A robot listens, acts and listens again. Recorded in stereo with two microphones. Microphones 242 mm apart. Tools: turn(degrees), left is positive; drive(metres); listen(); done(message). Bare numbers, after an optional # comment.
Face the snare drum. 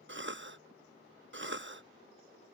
listen()
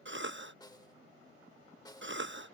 # The snare drum: about 15° left or 165° left.
turn(15)
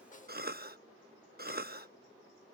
# So it is at 150° left.
turn(150)
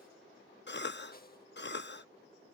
# The snare drum is now 40° left.
turn(40)
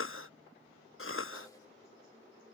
listen()
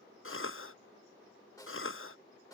# The snare drum is now 15° left.
turn(15)
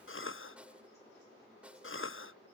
done("Found it: a snare drum, straight ahead.")